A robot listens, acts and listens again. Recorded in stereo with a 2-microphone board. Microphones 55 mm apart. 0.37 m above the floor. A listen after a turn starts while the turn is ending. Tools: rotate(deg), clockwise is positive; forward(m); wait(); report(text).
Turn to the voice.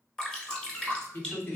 rotate(-45)
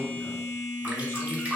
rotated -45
wait()
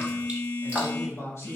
rotate(-85)
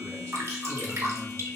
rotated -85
wait()
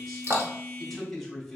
report("Found it: a man speaking, straight ahead.")